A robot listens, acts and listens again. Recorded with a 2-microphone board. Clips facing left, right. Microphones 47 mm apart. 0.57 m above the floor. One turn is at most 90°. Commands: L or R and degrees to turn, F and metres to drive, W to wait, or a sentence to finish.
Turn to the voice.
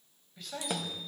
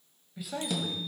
R30
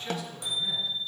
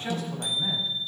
R90
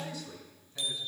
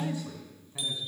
R30
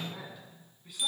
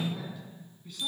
L10
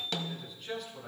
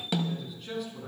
Facing the man speaking, over 4 m away.